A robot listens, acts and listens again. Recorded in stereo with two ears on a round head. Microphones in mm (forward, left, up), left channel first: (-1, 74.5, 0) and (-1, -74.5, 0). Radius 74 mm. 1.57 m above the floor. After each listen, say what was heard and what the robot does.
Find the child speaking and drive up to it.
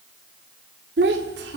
The child speaking: about 75° right or 105° right. Turn 75° right.
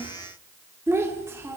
So it is at 15° right. Turn 15° right.
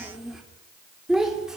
Drive 1.0 m forward.
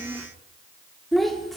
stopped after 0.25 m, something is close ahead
Blocked. The child speaking is further on, straight ahead.